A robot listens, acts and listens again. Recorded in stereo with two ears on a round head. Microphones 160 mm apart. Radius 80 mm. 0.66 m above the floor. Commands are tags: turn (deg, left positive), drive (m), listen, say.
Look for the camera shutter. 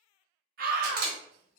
<turn deg="-50"/>
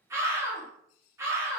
<listen/>
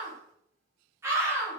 <listen/>
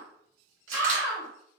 <say>I heard a camera shutter, but can't make it out now. It was about straight ahead or 80° right.</say>